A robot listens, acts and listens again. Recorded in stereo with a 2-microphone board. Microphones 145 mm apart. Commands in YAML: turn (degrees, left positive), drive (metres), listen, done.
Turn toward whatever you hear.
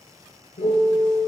turn: 90
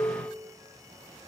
turn: 10
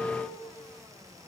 done: "Found it: a piano, straight ahead, 2 to 4 m away."